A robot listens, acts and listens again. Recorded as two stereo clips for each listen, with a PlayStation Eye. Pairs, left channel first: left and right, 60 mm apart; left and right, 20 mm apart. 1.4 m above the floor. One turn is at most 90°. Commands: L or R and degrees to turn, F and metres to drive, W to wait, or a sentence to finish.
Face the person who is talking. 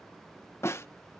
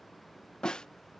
W
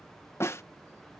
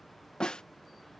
W
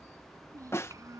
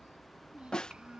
R70
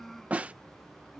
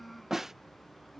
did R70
Found it: a child speaking, straight ahead.